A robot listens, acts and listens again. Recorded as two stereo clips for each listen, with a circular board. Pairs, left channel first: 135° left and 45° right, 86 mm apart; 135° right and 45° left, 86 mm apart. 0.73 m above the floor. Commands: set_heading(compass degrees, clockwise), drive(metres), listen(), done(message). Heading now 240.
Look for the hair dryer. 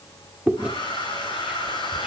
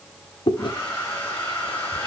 set_heading(75)
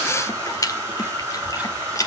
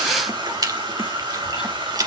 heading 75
set_heading(60)
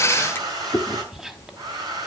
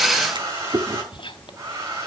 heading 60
done("Facing the hair dryer, over 4 m away.")